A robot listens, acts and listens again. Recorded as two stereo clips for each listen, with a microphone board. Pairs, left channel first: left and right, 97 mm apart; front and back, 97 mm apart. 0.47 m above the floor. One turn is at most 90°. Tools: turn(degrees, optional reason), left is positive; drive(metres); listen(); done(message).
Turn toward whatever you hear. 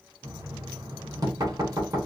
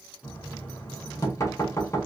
turn(degrees=-45, reason="The knocking: 45° right.")
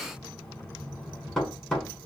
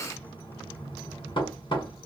turn(degrees=10, reason="The knocking is now 10° left.")
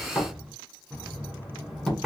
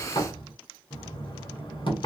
done("Facing the knocking, 1 to 2 m away.")